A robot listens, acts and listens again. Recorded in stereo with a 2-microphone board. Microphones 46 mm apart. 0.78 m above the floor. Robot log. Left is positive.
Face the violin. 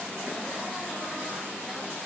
cmd idle
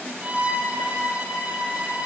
note: The violin: about 35° right or 145° right.
cmd yaw -35
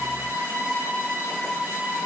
note: So it is at 115° right.
cmd yaw -115
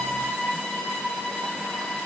note: The violin is now 10° left.
cmd yaw +10
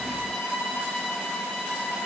end: Facing the violin.